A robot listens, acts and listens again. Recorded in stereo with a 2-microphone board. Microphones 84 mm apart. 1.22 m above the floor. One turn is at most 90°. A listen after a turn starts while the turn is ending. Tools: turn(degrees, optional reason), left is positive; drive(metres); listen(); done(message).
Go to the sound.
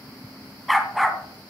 turn(degrees=30)
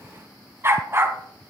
turn(degrees=-30, reason="So it is at 30° right.")
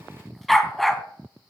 drive(metres=1.0)
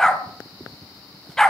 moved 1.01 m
turn(degrees=10, reason="The dog barking is now 10° left.")
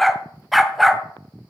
drive(metres=1.0)
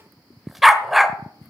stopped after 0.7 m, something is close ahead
done("I am next to the dog barking.")